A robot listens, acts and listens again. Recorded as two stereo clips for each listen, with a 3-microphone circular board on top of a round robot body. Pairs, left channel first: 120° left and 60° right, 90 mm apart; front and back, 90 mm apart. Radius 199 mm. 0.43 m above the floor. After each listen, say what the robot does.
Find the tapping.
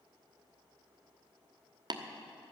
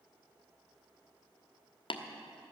Turn 20° right.
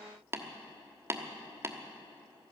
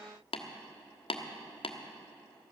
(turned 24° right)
Facing the tapping, 1 to 2 m away.